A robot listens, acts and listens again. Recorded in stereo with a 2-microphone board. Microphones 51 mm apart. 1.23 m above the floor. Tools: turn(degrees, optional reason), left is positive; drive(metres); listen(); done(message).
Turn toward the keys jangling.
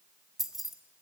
turn(degrees=30)
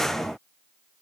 listen()
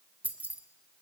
turn(degrees=-30, reason="So it is at 30° right.")
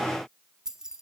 turn(degrees=-10, reason="The keys jangling is now 10° right.")
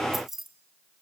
done("Found it: keys jangling, straight ahead, 1 to 2 m away.")